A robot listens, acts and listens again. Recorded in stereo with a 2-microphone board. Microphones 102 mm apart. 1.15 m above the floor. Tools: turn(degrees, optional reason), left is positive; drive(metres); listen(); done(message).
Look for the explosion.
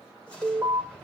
turn(degrees=30)
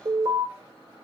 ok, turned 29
listen()
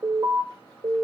done("I heard an explosion, but can't make it out now. It was about 20° right or 140° left.")